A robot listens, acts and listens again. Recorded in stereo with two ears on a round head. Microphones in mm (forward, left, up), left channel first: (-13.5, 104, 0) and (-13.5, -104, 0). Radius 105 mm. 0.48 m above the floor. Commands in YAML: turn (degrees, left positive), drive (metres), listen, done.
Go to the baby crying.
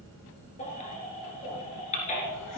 turn: 30
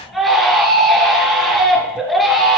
drive: 1.0
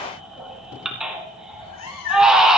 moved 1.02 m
drive: 1.0
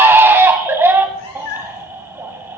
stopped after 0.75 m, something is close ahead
turn: -10
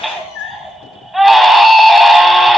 done: "I am next to the baby crying."